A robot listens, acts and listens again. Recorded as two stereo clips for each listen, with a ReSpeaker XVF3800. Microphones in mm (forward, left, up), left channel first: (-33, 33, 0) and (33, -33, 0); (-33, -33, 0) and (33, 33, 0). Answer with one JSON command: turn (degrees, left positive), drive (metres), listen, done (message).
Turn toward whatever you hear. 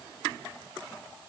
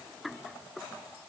{"listen": true}
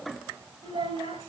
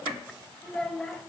{"turn": -60}
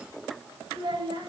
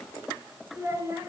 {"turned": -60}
{"turn": -15}
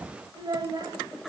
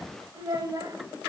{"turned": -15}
{"done": "Found it: a child speaking, straight ahead."}